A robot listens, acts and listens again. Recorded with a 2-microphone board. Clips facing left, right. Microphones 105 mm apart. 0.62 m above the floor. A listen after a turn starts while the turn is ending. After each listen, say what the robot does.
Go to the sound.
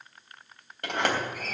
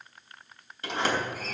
Turn 60° left.
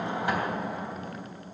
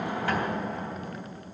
Drive 1.0 m forward.
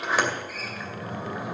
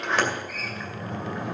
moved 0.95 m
Drive 1.0 m forward.
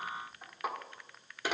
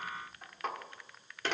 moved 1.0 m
Turn 10° left.
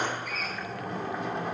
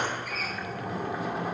Drive 1.0 m forward.
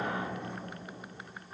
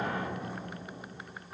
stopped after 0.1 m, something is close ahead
Arrived at the sliding door, straight ahead.